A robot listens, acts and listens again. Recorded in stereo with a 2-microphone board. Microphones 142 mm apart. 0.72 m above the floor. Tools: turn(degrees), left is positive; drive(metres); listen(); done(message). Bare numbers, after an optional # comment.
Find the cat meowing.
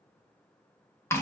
listen()
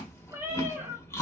# The cat meowing: about 15° right or 165° right.
turn(-15)
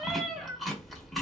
done("Facing the cat meowing, under 1 m away.")